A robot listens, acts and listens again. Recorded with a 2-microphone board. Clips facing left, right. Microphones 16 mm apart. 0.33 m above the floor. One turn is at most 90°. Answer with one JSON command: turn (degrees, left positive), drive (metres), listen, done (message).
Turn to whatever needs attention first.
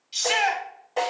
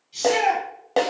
{"turn": 50}
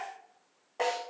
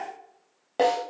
{"listen": true}
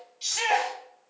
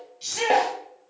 {"turn": 10}
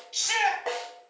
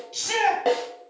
{"done": "Found it: a shout, straight ahead."}